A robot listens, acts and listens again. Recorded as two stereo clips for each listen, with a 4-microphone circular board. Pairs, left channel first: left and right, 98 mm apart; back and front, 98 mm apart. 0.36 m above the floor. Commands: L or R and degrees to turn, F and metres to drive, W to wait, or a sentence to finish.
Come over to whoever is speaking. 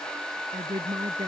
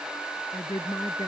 R135
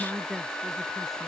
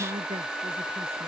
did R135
F1.0
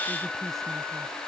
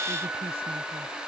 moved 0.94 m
W
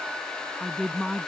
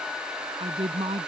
F1.0
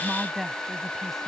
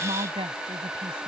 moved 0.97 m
F1.0
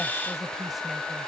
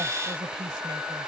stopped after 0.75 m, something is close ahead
Arrived at the woman speaking, straight ahead.